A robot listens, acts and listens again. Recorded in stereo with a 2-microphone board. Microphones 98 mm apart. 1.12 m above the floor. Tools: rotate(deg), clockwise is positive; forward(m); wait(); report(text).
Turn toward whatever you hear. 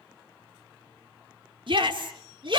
rotate(60)
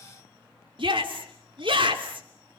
rotate(60)
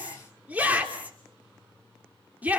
rotate(15)
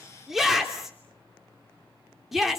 report("Facing the shout.")